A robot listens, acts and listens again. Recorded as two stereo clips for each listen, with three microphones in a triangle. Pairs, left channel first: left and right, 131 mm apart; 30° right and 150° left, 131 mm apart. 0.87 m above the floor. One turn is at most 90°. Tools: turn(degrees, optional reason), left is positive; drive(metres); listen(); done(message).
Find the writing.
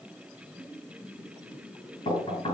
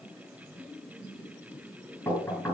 listen()
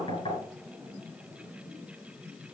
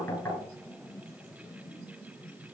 listen()
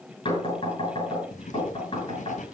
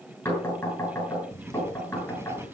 turn(degrees=80, reason="The writing: 80° left.")
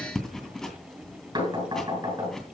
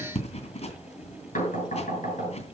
done("Facing the writing.")